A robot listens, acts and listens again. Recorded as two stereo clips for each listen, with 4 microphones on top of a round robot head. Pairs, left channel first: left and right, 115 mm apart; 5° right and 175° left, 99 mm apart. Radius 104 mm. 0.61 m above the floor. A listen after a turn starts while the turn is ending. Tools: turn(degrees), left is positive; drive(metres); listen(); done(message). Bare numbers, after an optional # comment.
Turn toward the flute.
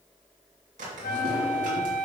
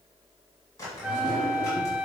# The flute: 95° left.
turn(95)
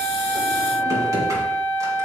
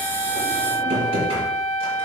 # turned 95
# The flute is now 15° left.
turn(15)
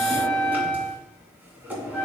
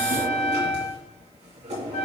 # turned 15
done("Found it: a flute, straight ahead.")